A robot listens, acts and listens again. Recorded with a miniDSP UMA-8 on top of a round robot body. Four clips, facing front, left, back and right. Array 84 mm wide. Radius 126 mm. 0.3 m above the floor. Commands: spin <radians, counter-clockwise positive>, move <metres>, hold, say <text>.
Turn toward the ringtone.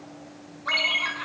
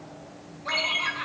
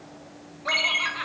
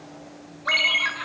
spin -1.75
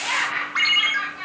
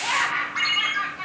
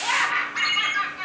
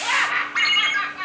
spin -0.61
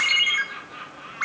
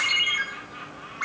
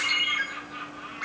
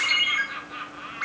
say Found it: a ringtone, straight ahead.